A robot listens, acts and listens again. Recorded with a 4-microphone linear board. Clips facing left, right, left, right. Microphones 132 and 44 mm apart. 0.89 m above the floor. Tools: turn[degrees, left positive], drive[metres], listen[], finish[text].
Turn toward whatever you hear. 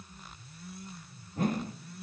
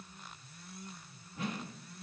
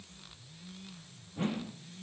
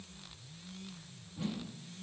Thought: The whoosh: about 45° left or 135° left.
Action: turn[45]
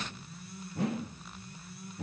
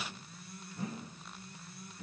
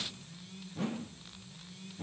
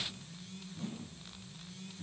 Thought: So it is at 85° left.
Action: turn[85]
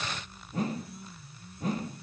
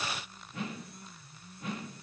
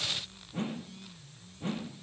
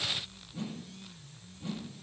Thought: The whoosh is now 40° left.
Action: turn[40]
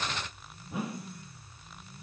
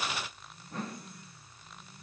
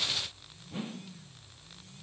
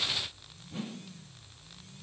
Thought: The whoosh is now 10° left.
Action: turn[10]
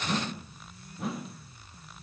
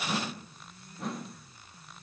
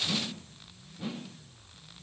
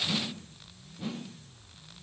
Action: finish[Facing the whoosh.]